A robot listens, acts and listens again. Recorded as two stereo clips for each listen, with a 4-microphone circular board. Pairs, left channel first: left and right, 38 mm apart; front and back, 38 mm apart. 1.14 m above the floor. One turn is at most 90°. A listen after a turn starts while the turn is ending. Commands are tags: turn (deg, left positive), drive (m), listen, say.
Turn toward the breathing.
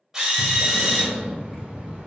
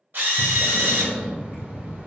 <turn deg="-90"/>
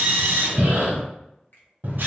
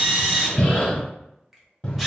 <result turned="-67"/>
<turn deg="-65"/>
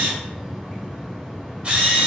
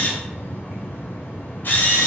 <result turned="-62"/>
<say>Facing the breathing.</say>